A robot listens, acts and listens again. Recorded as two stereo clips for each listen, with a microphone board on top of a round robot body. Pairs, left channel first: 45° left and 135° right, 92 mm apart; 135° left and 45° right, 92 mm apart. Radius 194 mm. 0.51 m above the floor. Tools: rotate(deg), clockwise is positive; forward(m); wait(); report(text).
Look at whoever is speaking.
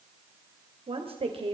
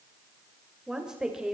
rotate(125)
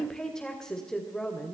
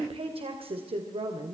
rotate(40)
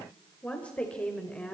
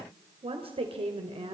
rotate(35)
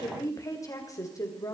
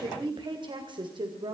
rotate(10)
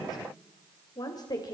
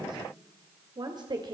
report("Facing the woman speaking.")